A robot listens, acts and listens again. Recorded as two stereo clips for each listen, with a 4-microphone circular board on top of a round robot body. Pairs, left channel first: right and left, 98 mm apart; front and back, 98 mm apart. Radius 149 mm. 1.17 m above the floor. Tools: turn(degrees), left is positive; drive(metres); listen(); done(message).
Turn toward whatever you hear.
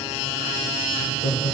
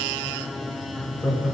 turn(degrees=-85)
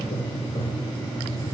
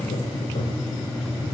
turn(degrees=-35)
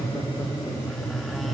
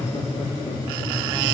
listen()
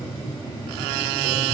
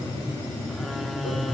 listen()
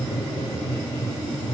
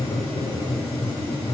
turn(degrees=-45)
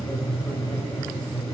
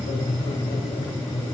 turn(degrees=-15)
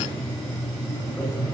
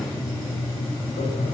done("Facing the laughter, 2 to 4 m away.")